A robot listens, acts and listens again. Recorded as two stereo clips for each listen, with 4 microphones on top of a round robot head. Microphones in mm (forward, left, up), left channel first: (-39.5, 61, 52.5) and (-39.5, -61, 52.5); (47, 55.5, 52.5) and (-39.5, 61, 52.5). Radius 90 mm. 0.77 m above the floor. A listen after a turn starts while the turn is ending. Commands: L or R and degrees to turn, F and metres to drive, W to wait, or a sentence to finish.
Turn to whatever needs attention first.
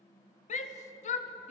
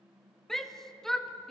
L80
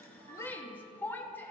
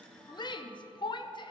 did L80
L15
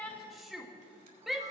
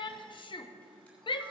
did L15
Found it: a shout, straight ahead.